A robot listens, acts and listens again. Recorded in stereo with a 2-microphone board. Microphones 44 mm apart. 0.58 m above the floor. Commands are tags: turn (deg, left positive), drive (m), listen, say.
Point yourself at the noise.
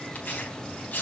<turn deg="45"/>
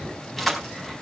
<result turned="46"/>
<say>Facing the tearing paper.</say>